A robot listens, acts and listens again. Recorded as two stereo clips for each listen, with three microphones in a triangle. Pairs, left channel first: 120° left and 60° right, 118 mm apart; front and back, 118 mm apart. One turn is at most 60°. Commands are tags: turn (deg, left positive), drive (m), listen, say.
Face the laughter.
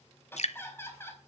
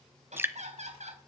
<turn deg="-60"/>
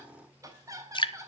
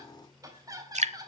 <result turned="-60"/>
<turn deg="-60"/>
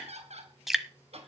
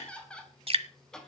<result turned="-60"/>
<turn deg="-60"/>
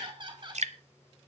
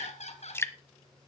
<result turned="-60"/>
<turn deg="-15"/>
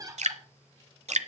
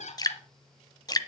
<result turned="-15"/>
<say>Facing the laughter.</say>